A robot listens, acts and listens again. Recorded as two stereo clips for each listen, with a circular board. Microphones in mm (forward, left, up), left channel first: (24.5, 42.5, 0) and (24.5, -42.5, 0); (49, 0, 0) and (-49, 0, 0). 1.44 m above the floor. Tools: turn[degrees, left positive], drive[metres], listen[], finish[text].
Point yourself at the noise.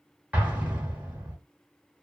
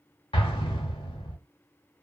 Thought: The explosion: 20° right.
Action: turn[-20]
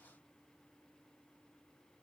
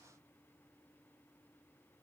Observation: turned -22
Action: finish[I heard an explosion from this way, but can't make it out now.]